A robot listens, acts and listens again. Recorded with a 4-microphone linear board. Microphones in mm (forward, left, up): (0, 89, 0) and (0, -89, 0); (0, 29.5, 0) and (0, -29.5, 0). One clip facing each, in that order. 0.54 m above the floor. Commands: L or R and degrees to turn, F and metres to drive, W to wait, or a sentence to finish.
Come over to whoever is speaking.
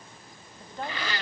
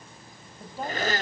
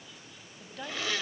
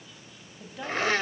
R30
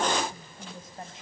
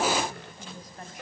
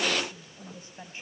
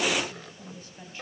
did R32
L25
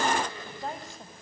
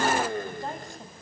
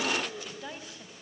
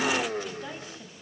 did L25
F1.0
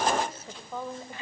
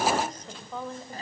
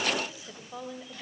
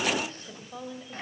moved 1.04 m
F1.0
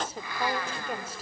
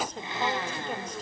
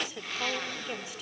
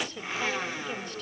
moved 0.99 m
L10
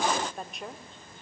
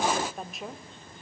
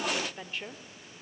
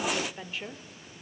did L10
F1.0
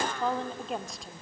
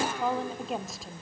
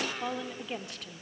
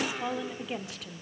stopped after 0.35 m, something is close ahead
Arrived at the woman speaking, straight ahead.